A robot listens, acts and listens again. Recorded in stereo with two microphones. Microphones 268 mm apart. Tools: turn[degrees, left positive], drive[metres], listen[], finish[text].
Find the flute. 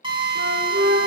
Thought: The flute: about 45° right or 135° right.
Action: turn[-45]
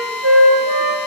Thought: So it is at 90° right.
Action: turn[-90]
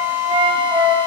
Thought: The flute is now 20° right.
Action: turn[-20]
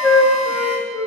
Action: finish[Found it: a flute, straight ahead, 1 to 2 m away.]